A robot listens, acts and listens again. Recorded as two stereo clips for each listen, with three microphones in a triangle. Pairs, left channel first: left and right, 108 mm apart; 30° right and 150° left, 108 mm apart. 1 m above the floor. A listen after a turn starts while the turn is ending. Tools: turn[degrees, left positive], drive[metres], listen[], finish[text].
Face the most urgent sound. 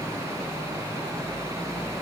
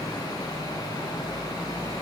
Action: listen[]
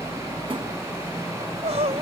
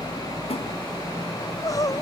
Thought: The crying: 85° right.
Action: turn[-85]
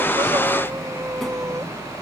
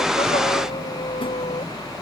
Action: listen[]
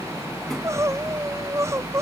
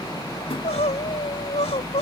Thought: The crying is now 30° right.
Action: turn[-30]
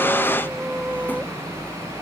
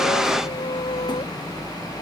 Action: listen[]
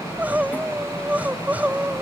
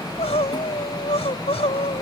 Thought: The crying is now 15° right.
Action: turn[-15]
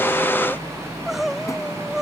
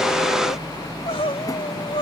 Action: finish[Facing the crying.]